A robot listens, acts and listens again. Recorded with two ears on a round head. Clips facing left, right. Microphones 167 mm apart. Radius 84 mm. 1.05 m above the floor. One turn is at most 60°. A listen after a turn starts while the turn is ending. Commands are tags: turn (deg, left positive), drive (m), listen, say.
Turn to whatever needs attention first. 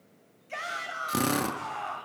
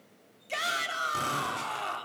<turn deg="-45"/>
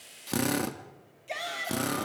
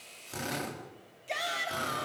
<say>Facing the shout, 2 to 4 m away.</say>